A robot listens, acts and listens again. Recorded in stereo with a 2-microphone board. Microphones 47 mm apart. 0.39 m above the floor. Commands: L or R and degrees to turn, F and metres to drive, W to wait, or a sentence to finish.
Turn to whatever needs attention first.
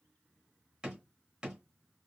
W
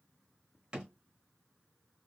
W
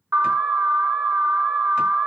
R55
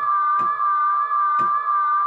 R10
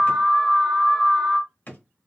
Facing the alarm, under 1 m away.